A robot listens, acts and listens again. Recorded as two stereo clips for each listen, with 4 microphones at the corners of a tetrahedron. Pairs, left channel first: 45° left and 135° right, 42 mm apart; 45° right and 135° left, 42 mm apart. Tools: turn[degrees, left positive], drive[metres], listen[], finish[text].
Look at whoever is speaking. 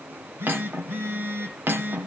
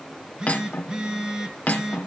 Action: listen[]
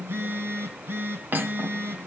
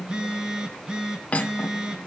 Action: listen[]
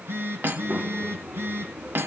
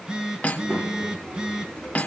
Thought: The child speaking: straight behind.
Action: turn[180]
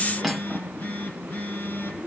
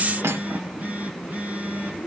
Thought: The child speaking is now 55° left.
Action: turn[55]
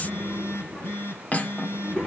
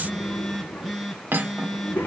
Thought: The child speaking is now 15° left.
Action: turn[15]
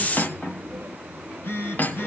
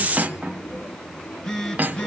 Action: finish[Found it: a child speaking, straight ahead.]